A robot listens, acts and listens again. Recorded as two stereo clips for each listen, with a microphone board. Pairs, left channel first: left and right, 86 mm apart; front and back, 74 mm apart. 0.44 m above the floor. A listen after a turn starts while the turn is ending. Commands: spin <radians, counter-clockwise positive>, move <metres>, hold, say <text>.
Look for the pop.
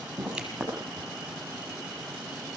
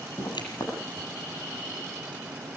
say Facing the pop, over 4 m away.